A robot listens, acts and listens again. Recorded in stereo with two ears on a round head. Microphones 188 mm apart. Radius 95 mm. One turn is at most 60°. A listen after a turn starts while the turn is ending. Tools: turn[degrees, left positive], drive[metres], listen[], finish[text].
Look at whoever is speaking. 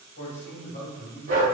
Thought: The man speaking: about 50° left or 130° left.
Action: turn[50]
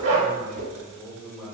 Thought: So it is at 10° right.
Action: turn[-10]
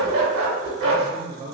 Thought: The man speaking is now 25° right.
Action: turn[-25]
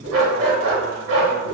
Action: listen[]
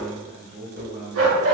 Thought: The man speaking is now 55° right.
Action: turn[-55]
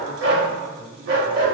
Thought: The man speaking is now 40° right.
Action: turn[-40]
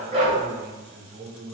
Thought: The man speaking is now 10° right.
Action: turn[-10]
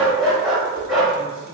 Action: listen[]
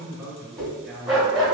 Action: finish[Found it: a man speaking, straight ahead.]